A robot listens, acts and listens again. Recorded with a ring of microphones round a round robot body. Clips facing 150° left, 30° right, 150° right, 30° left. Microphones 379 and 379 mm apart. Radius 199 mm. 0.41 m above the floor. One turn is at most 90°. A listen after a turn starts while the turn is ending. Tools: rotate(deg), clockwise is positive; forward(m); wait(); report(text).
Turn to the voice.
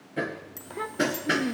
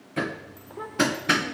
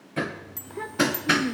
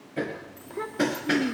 rotate(-90)
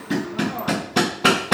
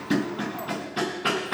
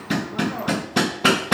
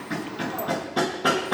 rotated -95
rotate(-30)
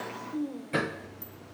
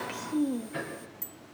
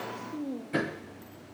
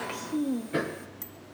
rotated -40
rotate(10)
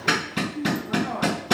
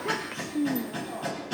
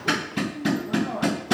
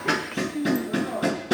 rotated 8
report("Found it: a child speaking, straight ahead, 1 to 2 m away.")